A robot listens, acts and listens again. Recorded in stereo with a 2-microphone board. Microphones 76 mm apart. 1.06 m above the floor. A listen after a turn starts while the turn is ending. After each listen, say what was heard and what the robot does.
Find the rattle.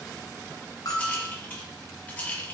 The rattle: about 20° left or 160° left. Turn 20° left.
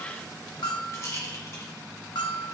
So it is at 140° left. Turn 140° left.
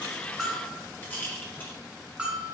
The rattle is now 25° left. Turn 25° left.
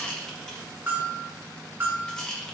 The rattle is now 10° left. Turn 10° left.
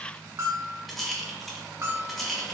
Found it: a rattle, straight ahead.